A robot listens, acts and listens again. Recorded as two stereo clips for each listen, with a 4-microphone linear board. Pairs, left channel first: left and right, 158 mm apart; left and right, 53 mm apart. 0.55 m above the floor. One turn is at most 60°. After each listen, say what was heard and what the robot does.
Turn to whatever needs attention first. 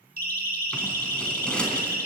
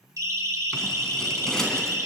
The siren: about 65° right or 115° right. Turn 60° right.
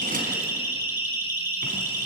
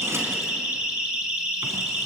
So it is at 15° right. Turn 15° right.
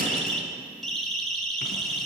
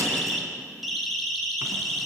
Facing the siren.